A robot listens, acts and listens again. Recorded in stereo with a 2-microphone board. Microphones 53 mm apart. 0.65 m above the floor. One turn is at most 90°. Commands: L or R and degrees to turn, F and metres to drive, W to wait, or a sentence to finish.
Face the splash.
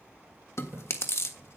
R45
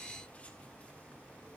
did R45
W
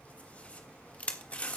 I heard a splash, but can't make it out now. It was about straight ahead or 90° right.